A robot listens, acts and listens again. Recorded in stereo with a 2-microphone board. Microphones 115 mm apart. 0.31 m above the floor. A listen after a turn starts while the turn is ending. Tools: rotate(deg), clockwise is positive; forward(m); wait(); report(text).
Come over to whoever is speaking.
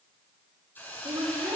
rotate(35)
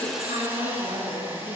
rotate(110)
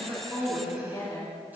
rotate(-35)
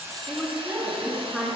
forward(1.0)
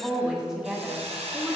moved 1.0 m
forward(1.0)
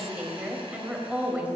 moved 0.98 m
rotate(20)
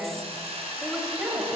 forward(1.0)
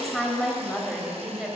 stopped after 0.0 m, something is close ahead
report("Arrived at the woman speaking, straight ahead.")